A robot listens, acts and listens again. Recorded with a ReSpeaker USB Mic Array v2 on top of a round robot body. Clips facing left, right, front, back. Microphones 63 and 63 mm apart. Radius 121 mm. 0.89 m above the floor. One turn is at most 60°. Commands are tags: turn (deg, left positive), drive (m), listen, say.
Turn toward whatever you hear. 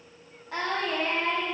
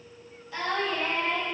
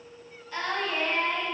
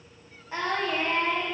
<turn deg="60"/>
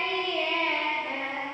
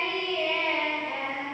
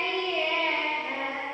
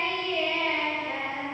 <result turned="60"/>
<turn deg="60"/>
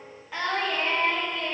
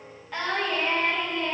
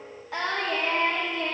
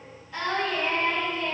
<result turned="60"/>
<say>Facing the singing, 2 to 4 m away.</say>